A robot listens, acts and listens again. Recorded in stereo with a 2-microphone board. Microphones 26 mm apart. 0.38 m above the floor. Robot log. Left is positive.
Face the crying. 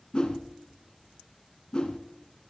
cmd idle
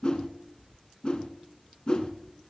cmd idle
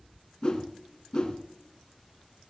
end: I can't make out crying, only a whoosh.